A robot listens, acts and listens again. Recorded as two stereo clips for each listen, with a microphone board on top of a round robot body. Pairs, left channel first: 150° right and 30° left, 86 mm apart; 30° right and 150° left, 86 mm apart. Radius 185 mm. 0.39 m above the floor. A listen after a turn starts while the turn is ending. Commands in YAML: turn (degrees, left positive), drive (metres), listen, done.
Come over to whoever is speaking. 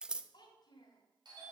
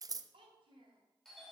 turn: 170
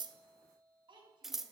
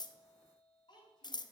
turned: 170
drive: 1.0
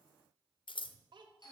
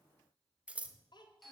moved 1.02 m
drive: 1.0
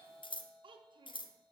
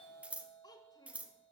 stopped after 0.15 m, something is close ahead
turn: 10
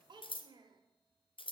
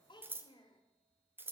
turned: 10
done: "I am next to the child speaking."